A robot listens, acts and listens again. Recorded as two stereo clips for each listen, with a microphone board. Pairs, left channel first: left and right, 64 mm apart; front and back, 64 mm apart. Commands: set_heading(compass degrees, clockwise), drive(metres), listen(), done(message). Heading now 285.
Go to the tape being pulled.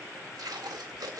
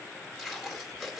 set_heading(15)
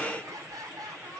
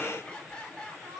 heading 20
listen()
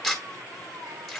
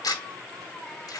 drive(1.0)
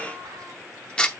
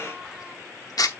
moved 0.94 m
set_heading(5)
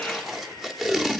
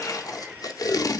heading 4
drive(1.0)
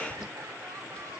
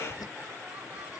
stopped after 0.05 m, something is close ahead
listen()
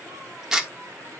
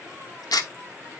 done("I am next to the tape being pulled.")